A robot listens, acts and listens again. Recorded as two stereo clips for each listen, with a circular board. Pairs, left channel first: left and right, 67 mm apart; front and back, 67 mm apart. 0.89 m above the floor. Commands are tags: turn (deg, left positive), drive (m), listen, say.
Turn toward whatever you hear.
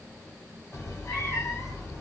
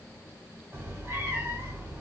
<turn deg="130"/>
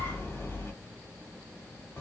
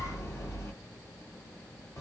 <turn deg="40"/>
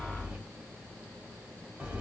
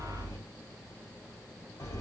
<turn deg="-20"/>
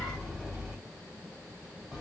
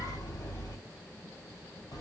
<say>Found it: a cat meowing, straight ahead, 1 to 2 m away.</say>